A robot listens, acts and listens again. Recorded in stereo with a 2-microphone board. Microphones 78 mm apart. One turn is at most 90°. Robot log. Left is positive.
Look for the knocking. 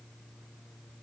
cmd idle
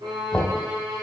cmd yaw +30
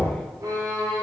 note: So it is at 140° left.
cmd yaw +90
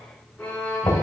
note: The knocking is now 70° left.
cmd yaw +70
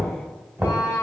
note: The knocking is now 25° right.
cmd yaw -25
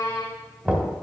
note: The knocking is now 10° right.
cmd yaw -10
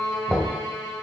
end: Found it: knocking, straight ahead, 1 to 2 m away.